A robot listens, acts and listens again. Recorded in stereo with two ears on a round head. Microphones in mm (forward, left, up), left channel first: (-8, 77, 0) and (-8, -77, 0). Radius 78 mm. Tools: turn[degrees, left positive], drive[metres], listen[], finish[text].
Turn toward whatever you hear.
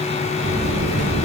Thought: The buzzer: about 40° right or 140° right.
Action: turn[-40]
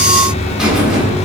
Action: finish[Facing the buzzer, 1 to 2 m away.]